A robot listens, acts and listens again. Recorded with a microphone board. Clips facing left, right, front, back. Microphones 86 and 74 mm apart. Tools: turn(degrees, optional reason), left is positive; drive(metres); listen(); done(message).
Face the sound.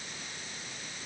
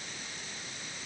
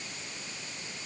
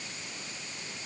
listen()
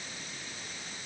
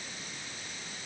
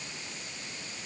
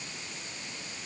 listen()
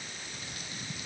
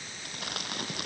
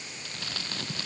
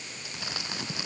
turn(degrees=-105, reason="The crumpling: 105° right.")
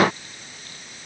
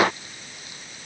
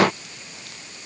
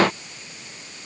listen()
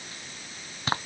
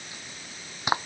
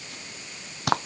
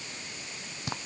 turn(degrees=-15, reason="The crumpling is now 15° right.")
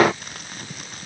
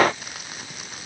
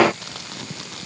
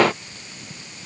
done("Facing the crumpling.")